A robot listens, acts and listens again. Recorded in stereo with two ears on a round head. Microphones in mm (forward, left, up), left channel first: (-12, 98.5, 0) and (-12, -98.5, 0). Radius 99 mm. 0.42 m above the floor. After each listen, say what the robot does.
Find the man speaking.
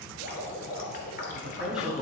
Turn 30° right.
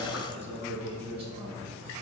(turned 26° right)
Turn 150° right.
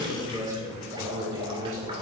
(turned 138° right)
Turn 15° right.
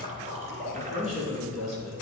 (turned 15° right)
Facing the man speaking.